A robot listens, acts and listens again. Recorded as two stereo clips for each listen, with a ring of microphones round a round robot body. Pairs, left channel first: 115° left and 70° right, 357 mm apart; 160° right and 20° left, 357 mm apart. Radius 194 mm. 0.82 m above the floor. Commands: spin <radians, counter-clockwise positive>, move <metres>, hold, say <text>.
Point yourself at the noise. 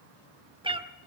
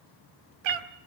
spin 0.17
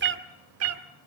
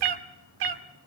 spin -0.26
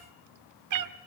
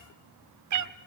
spin -0.44
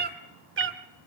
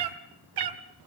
spin -0.17
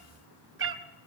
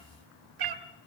spin -0.17
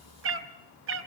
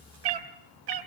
spin -0.17
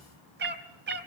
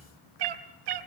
say Facing the cat meowing, 2 to 4 m away.